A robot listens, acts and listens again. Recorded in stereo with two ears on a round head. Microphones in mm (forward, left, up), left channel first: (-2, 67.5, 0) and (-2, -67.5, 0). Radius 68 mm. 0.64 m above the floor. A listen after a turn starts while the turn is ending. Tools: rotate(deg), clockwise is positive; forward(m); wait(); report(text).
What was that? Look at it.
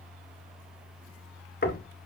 rotate(-65)
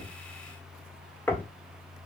rotate(-15)
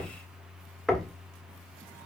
report("Found it: knocking, straight ahead, 1 to 2 m away.")